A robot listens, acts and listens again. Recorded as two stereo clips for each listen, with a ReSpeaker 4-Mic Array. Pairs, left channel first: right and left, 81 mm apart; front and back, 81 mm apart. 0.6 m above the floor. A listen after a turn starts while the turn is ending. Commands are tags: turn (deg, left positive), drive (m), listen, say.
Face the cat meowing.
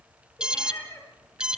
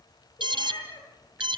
<turn deg="-35"/>
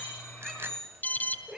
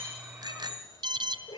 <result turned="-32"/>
<say>Facing the cat meowing.</say>